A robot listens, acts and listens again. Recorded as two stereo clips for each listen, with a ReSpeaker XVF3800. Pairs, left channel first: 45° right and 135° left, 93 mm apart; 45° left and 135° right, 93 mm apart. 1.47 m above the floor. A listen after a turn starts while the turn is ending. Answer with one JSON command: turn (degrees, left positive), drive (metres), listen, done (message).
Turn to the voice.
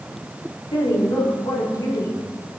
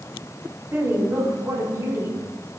{"turn": -85}
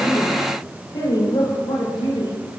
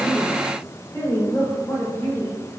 {"turn": -20}
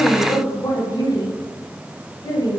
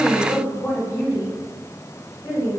{"done": "Facing the woman speaking."}